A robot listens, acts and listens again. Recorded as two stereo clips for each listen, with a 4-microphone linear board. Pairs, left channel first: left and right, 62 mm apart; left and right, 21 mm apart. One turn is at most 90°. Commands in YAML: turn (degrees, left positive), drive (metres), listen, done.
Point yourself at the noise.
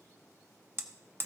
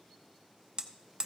turn: -40
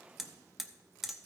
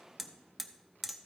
turn: -10
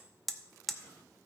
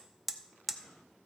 done: "Found it: hammering, straight ahead, under 1 m away."